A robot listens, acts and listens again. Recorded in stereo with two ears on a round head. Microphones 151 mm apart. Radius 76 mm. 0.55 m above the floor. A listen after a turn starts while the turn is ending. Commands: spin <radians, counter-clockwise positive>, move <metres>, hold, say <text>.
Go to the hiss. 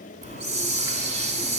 spin -0.70
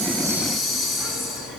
move 1.0
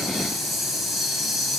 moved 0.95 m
move 1.0
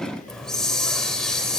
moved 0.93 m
move 1.0
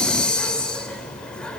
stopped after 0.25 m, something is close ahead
say I am next to the hiss.